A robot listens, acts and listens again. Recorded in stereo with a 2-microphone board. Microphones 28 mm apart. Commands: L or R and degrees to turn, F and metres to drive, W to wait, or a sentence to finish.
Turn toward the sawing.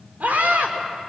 W
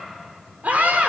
W
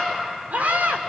I can't make out sawing, only a scream.